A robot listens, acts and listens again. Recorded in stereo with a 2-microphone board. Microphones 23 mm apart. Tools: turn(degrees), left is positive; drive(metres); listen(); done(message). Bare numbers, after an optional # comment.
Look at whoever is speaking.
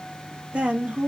# The woman speaking: about 60° right or 120° right.
turn(-60)
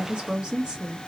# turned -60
# So it is at 45° right.
turn(-45)
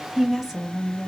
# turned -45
# The woman speaking is now 15° right.
turn(-15)
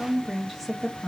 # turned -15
done("Facing the woman speaking.")